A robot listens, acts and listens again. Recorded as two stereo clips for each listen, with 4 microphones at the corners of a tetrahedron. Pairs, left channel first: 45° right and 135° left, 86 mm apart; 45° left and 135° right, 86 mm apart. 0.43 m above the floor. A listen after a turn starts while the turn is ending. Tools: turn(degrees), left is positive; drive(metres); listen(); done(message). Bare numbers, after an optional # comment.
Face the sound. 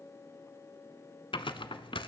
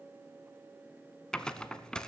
# The tearing paper: 35° right.
turn(-35)
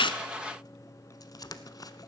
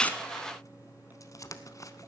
done("Facing the tearing paper, under 1 m away.")